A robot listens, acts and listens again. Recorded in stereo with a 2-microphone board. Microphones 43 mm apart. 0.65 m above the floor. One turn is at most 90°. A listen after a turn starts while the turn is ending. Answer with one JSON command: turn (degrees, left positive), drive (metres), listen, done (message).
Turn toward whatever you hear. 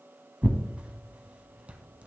{"turn": -30}
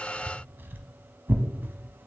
{"turn": -90}
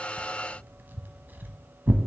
{"turn": -50}
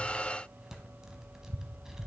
{"turn": -10}
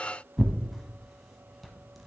{"done": "Facing the tearing paper."}